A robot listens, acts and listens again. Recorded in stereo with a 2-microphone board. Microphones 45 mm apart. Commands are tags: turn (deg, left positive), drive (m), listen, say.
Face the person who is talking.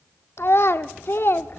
<turn deg="60"/>
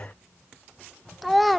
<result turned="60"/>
<say>Found it: a child speaking, straight ahead, under 1 m away.</say>